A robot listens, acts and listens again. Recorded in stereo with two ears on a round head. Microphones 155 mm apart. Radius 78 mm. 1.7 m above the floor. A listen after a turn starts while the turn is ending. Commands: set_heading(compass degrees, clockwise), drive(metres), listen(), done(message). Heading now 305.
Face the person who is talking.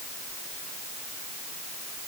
listen()
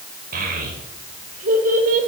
set_heading(355)
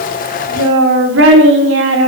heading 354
set_heading(64)
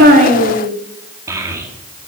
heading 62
set_heading(77)
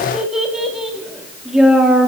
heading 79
done("Facing the child speaking, 2 to 4 m away.")